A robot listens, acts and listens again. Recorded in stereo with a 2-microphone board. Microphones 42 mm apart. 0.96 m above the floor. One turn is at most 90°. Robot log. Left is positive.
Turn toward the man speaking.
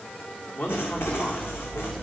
note: The man speaking: about 50° left or 130° left.
cmd yaw +50
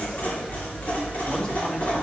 cmd idle
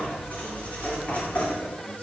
cmd idle
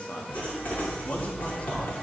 note: So it is at 40° left.
cmd yaw +40
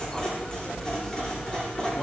cmd idle
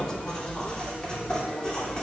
note: The man speaking is now 20° left.
cmd yaw +20
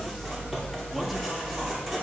cmd idle
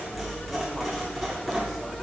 cmd idle
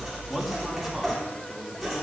end: Facing the man speaking, 2 to 4 m away.